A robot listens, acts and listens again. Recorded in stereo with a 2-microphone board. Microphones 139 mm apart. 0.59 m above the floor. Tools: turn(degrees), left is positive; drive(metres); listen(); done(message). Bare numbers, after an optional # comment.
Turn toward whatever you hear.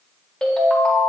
turn(30)
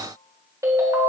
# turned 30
# So it is at 25° right.
turn(-25)
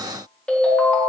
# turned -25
# The ringtone is now 10° left.
turn(10)
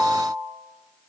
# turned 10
done("Facing the ringtone, 1 to 2 m away.")